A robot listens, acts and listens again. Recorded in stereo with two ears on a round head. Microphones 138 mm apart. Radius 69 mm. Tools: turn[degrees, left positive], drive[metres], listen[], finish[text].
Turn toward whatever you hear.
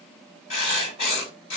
Thought: The writing: about 40° left or 140° left.
Action: turn[40]
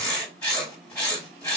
Thought: So it is at 10° left.
Action: turn[10]
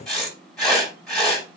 Action: finish[Found it: writing, straight ahead, 2 to 4 m away.]